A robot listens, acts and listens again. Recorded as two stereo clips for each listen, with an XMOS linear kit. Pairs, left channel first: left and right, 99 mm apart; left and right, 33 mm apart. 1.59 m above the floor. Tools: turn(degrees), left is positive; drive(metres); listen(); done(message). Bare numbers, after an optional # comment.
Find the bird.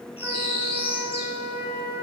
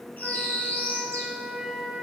# The bird: about 70° left or 110° left.
turn(70)
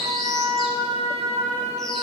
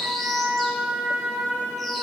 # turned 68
done("Facing the bird, 2 to 4 m away.")